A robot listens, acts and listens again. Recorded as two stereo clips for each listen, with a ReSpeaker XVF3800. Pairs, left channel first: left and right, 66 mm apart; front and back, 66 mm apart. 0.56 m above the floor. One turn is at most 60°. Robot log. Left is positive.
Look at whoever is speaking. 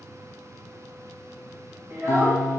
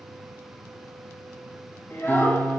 note: The child speaking: 50° right.
cmd yaw -50
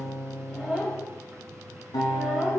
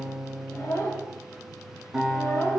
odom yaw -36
note: The child speaking is now 15° right.
cmd yaw -15
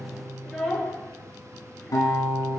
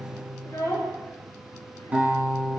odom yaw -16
end: Facing the child speaking, 2 to 4 m away.